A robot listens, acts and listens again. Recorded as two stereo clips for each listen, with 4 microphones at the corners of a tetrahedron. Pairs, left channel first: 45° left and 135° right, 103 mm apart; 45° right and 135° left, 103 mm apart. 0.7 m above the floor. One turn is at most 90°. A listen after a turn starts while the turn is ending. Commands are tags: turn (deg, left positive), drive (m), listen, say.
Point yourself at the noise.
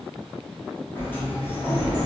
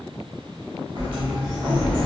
<turn deg="90"/>
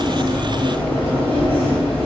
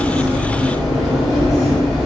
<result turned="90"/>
<turn deg="45"/>
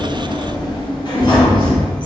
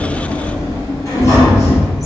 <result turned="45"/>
<turn deg="10"/>
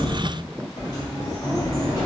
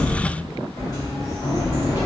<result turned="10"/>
<say>Facing the sliding door.</say>